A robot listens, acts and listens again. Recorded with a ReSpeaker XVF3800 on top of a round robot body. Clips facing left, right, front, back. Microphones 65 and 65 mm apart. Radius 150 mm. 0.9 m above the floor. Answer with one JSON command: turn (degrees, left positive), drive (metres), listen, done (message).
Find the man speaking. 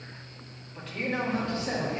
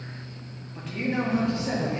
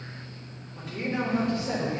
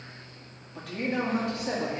{"turn": -155}
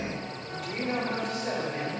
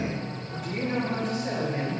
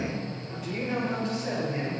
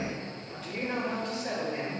{"turn": 70}
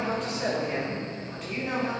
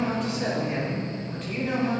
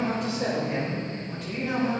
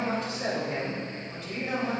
{"done": "Found it: a man speaking, straight ahead."}